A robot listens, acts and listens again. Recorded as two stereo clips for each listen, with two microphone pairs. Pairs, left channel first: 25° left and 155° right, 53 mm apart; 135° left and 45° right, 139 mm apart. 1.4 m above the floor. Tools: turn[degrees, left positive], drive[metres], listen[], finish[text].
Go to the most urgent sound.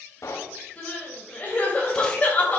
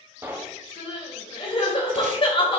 Thought: The crying: 85° left.
Action: turn[85]
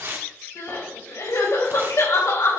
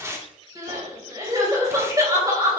Thought: The crying is now 20° left.
Action: turn[20]
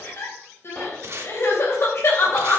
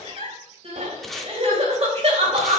Action: drive[1.0]
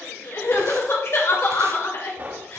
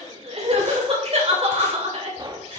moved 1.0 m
Action: drive[1.0]
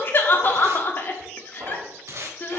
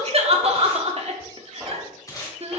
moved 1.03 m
Thought: The crying is now 15° right.
Action: turn[-15]
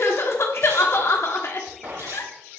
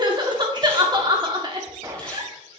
Action: drive[1.0]
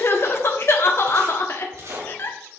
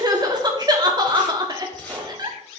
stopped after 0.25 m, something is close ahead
Action: finish[I am next to the crying.]